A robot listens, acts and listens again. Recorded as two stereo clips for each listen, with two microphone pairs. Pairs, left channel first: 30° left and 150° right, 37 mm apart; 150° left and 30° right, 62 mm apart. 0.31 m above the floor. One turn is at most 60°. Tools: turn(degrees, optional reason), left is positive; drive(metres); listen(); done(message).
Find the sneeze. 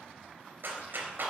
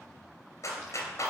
listen()
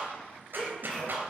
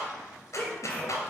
turn(degrees=60, reason="The sneeze: 95° left.")
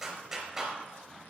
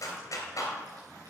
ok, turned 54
turn(degrees=40, reason="Nothing new. It was at 40° left.")
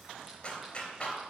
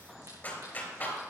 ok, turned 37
done("Facing where the sneeze came from. I can't hear it now.")